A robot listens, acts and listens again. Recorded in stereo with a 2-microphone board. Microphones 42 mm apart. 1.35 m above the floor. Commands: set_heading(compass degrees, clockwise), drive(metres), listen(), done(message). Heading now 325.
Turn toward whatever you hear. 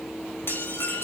set_heading(255)
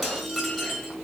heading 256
done("Facing the dishes clattering, over 4 m away.")